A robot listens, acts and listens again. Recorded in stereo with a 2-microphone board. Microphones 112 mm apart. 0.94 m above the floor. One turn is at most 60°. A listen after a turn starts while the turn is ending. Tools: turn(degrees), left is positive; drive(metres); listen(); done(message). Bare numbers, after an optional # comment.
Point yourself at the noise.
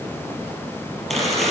turn(30)
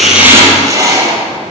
# So it is at 25° right.
turn(-25)
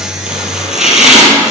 done("Facing the chopping, 2 to 4 m away.")